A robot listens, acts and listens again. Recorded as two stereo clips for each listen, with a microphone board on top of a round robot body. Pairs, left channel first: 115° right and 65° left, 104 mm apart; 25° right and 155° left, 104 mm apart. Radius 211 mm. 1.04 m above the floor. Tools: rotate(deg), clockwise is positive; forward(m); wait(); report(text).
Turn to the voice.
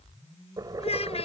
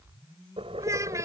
rotate(140)
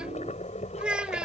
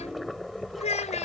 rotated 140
rotate(15)
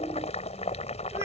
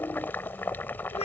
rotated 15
wait()
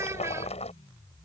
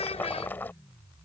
report("Found it: a child speaking, straight ahead.")